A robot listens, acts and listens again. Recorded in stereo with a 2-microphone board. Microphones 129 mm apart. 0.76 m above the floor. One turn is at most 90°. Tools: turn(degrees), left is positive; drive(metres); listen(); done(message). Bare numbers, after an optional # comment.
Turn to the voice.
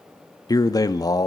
# The man speaking: about 30° left or 150° left.
turn(30)
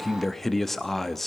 done("Facing the man speaking.")